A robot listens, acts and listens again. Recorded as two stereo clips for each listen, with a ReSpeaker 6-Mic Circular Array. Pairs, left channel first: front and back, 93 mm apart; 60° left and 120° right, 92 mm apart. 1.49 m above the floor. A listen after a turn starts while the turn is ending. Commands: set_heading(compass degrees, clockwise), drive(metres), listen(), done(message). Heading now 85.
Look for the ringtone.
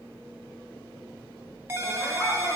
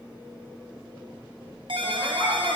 set_heading(205)
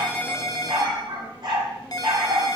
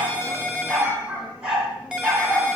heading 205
set_heading(245)
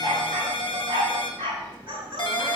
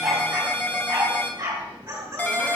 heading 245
done("Found it: a ringtone, straight ahead, under 1 m away.")